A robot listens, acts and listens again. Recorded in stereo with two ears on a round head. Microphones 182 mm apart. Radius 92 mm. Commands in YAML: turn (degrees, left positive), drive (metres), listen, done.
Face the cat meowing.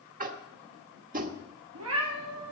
turn: -90
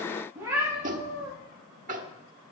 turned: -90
turn: -10
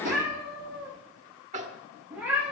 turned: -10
done: "Found it: a cat meowing, straight ahead, over 4 m away."